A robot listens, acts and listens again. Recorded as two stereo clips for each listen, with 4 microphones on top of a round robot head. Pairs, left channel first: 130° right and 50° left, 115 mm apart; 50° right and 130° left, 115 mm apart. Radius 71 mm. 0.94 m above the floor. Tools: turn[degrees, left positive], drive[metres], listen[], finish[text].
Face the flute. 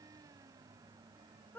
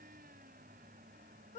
Action: listen[]
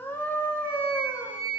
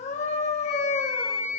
Thought: The flute: 10° right.
Action: turn[-10]
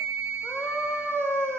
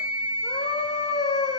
Action: finish[Found it: a flute, straight ahead, over 4 m away.]